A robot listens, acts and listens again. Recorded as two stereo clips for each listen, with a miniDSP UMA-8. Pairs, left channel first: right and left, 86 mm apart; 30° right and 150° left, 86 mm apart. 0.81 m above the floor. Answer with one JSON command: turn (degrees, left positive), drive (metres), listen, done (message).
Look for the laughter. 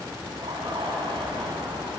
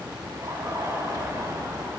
{"turn": 100}
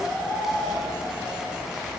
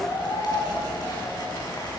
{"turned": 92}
{"done": "Found it: laughter, straight ahead."}